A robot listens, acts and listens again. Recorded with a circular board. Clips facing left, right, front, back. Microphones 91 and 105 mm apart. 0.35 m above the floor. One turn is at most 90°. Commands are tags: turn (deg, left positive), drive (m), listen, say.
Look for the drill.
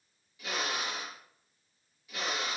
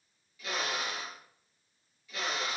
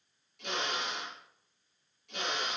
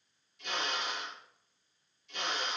<turn deg="20"/>
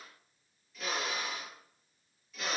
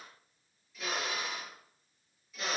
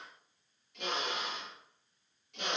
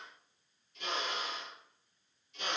<say>Facing the drill, over 4 m away.</say>